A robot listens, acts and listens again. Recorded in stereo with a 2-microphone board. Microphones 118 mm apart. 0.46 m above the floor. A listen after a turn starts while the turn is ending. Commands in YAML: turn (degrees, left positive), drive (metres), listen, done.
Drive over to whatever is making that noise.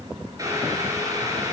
turn: -30
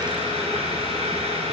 turn: -120
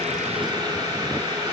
turn: -35
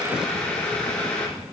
turn: 10
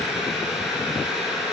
drive: 1.0
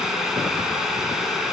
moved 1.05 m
drive: 1.0
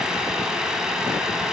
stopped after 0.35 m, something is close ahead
done: "I am next to the boiling."